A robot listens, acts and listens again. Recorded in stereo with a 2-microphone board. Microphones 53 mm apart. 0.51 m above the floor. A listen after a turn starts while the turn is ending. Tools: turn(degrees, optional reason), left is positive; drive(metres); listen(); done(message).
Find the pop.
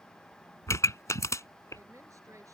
turn(degrees=70, reason="The pop: about 70° left or 110° left.")
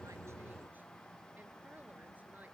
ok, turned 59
listen()
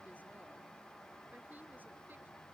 done("I heard a pop, but can't make it out now. It was about 15° left or 50° left.")